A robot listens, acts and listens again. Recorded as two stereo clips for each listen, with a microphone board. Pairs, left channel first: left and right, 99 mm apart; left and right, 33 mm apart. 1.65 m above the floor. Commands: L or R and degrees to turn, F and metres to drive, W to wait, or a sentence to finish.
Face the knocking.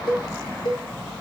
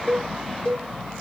W
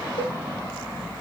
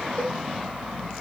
W
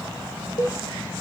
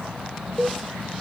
I can't make out knocking, only a cowbell.